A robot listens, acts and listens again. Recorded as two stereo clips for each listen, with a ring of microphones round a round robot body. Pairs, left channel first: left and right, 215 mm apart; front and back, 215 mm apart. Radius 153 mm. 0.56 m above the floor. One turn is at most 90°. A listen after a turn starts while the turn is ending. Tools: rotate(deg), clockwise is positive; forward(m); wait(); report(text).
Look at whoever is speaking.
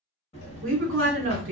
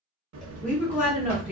rotate(90)
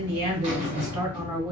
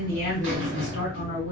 wait()
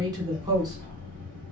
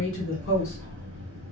wait()
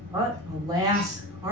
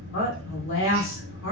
rotate(20)
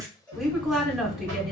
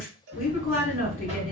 wait()
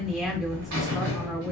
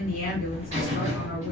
wait()
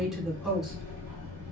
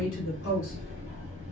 report("I heard a woman speaking from this way, but can't make it out now.")